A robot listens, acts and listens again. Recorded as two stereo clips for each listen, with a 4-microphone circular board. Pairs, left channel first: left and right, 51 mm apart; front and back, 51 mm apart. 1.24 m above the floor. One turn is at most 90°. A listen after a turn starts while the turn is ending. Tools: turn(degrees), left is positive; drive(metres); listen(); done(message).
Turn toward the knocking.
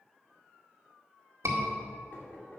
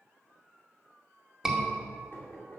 turn(degrees=40)
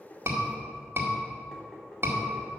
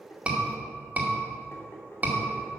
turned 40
turn(degrees=15)
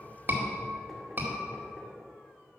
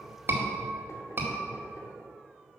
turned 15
listen()
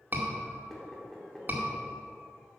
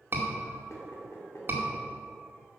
done("Found it: knocking, straight ahead.")